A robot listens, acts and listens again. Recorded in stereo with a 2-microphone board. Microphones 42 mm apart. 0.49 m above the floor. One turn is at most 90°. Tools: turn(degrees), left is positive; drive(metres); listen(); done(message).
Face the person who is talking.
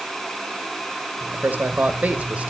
turn(degrees=-35)
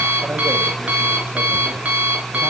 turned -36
listen()
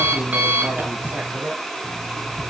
turn(degrees=-40)
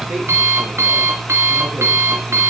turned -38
listen()
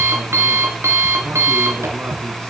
listen()
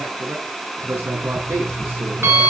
turn(degrees=-90)
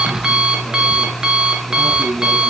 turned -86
turn(degrees=-20)
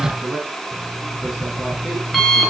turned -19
done("Facing the man speaking, 2 to 4 m away.")